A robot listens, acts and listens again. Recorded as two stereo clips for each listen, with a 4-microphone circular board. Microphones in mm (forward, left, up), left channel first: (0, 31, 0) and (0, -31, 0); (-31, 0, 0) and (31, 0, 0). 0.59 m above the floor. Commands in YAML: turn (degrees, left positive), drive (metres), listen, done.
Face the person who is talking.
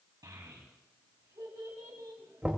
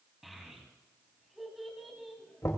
turn: -90
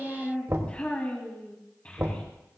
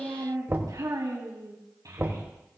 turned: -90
turn: 20
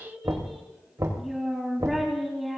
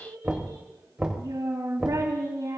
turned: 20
done: "Found it: a child speaking, straight ahead, 2 to 4 m away."